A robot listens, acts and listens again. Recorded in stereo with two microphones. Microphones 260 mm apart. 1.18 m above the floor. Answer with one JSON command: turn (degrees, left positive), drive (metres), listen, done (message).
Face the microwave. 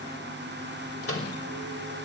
{"turn": 60}
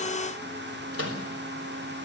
{"turn": 60}
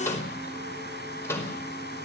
{"turn": 10}
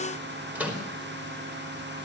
{"done": "Facing the microwave."}